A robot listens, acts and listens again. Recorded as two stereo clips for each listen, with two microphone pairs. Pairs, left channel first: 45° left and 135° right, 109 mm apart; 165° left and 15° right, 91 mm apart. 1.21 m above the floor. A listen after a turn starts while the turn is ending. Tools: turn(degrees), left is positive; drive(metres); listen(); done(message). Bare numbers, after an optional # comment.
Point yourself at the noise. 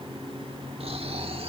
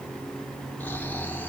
# The snoring: 125° right.
turn(-125)
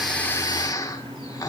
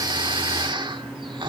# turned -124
done("Found it: snoring, straight ahead.")